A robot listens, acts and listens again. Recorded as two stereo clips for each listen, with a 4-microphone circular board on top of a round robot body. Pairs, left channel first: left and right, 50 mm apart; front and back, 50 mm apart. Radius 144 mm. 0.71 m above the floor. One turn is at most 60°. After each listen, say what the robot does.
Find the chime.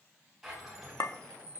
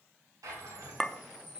Turn 60° right.
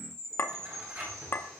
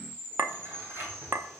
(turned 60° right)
Turn 60° right.
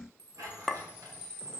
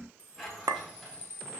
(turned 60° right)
Turn 20° right.
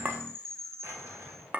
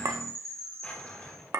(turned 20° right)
Found it: a chime, straight ahead.